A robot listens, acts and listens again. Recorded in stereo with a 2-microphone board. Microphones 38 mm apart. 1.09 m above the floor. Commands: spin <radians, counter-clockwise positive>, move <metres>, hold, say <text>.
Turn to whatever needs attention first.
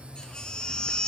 spin 0.44
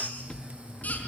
spin 2.27
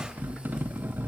hold
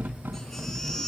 spin 0.17
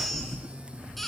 say Facing the baby crying, over 4 m away.